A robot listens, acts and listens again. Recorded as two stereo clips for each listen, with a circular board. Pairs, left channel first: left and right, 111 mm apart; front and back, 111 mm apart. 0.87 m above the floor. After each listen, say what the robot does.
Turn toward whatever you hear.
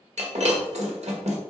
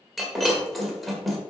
Turn 90° right.
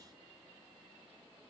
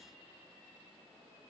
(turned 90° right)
I heard breaking glass from this way, but can't make it out now.